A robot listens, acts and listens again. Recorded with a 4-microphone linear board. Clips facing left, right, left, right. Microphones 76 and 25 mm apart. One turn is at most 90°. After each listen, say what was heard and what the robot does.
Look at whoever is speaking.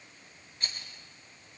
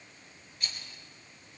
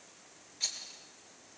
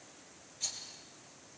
Keep listening.
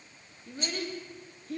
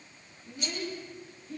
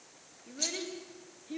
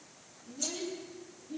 The child speaking: about 65° left or 115° left. Turn 65° left.
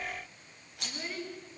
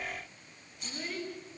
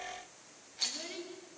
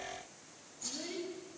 Found it: a child speaking, straight ahead.